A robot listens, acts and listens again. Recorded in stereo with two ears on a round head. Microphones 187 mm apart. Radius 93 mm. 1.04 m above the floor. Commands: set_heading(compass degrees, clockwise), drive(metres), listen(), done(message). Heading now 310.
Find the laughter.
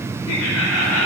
set_heading(220)
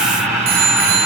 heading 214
done("Found it: laughter, straight ahead.")